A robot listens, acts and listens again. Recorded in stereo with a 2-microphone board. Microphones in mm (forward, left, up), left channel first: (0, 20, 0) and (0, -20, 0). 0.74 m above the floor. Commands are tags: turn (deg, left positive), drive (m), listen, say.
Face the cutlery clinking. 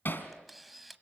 <listen/>
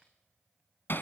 <listen/>
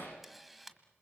<say>I can't make out cutlery clinking to turn to.</say>